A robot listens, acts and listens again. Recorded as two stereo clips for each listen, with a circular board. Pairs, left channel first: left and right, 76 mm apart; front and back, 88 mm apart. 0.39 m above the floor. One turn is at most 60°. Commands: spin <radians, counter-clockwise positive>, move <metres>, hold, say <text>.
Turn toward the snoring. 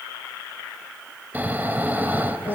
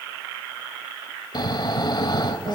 spin -0.44
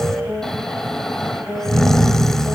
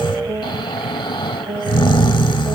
say Found it: snoring, straight ahead.